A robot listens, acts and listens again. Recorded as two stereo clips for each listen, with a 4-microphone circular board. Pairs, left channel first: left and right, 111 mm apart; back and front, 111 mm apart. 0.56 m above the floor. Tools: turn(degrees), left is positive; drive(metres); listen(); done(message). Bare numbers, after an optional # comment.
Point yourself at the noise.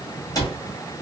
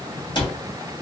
# The cupboard door: 140° left.
turn(140)
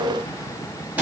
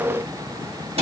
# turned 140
# The cupboard door is now 15° right.
turn(-15)
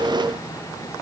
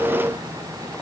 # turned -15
listen()
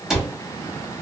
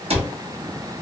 done("Found it: a cupboard door, straight ahead.")